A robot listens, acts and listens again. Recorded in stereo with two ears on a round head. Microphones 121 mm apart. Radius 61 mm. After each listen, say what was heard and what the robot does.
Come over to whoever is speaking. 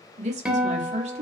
The woman speaking: about 55° right or 125° right. Turn 55° right.
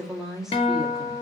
Drive 1.0 m forward.
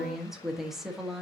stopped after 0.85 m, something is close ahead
I am next to the woman speaking.